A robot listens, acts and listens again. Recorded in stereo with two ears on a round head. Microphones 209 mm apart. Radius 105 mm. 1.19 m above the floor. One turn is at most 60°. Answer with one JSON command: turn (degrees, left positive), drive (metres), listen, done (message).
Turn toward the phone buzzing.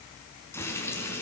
{"listen": true}
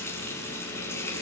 {"listen": true}
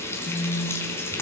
{"turn": 20}
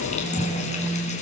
{"done": "Found it: a phone buzzing, straight ahead, 1 to 2 m away."}